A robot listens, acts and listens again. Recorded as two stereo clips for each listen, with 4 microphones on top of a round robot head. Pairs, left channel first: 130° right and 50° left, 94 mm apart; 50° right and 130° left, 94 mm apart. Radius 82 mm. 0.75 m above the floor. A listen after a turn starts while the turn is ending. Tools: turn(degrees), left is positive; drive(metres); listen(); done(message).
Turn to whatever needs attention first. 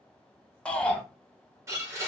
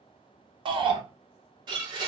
turn(degrees=150)
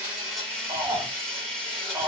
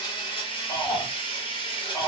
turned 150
done("Facing the shout, under 1 m away.")